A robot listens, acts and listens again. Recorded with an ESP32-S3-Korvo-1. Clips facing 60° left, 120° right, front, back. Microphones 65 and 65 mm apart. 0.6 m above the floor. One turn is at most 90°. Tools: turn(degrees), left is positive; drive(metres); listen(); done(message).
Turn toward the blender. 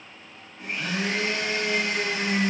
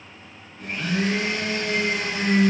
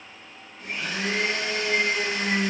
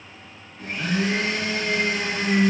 turn(degrees=90)
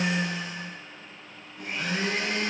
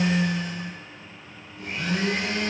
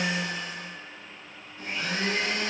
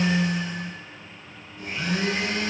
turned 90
turn(degrees=55)
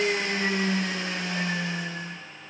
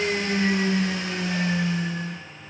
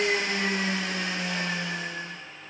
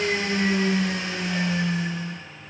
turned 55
turn(degrees=20)
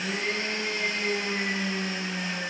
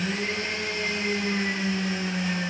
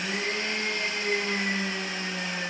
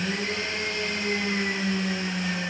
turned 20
done("Found it: a blender, straight ahead.")